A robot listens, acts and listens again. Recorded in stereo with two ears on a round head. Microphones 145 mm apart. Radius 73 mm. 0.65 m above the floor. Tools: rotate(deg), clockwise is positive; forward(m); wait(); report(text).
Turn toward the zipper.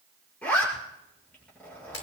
rotate(-30)
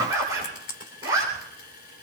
rotate(20)
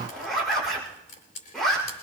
report("Found it: a zipper, straight ahead.")